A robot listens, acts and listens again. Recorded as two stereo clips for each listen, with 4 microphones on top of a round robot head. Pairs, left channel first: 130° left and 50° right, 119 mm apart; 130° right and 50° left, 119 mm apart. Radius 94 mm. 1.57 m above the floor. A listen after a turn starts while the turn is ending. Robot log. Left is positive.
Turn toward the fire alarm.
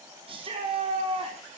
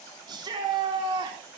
cmd idle
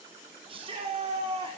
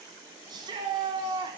cmd idle
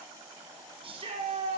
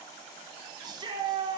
end: I can't make out a fire alarm, only a shout.